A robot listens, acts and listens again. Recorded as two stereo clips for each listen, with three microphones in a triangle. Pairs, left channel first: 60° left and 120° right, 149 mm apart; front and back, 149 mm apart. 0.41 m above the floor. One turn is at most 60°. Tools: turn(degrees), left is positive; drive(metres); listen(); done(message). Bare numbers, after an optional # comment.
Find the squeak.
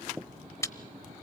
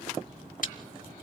listen()
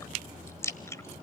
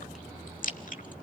listen()
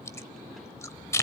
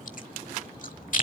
done("I can't make out a squeak to turn to.")